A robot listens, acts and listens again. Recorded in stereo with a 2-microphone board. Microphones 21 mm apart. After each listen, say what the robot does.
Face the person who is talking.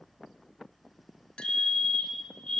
Keep listening.
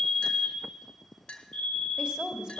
Turn 50° right.
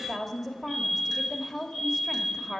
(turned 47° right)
Turn 15° right.
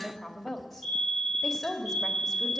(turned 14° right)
Facing the woman speaking.